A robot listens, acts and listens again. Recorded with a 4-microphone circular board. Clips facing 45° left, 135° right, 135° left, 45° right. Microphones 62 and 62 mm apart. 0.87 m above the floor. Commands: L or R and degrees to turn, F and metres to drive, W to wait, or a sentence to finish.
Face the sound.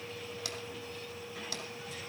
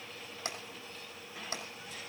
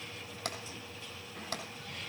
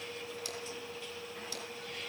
L165
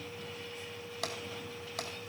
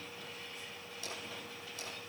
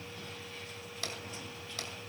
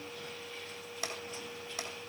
L25
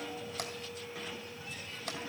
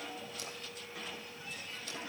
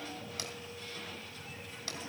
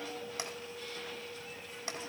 W
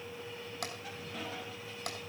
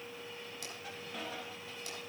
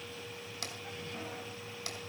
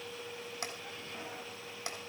L15
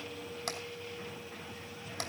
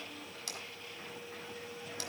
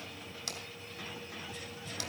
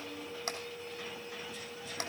Facing the tapping.